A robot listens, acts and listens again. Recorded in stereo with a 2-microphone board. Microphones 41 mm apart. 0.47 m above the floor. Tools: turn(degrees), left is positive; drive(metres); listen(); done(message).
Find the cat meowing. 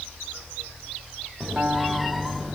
turn(degrees=30)
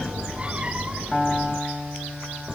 turn(degrees=-20)
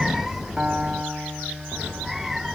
done("Found it: a cat meowing, straight ahead.")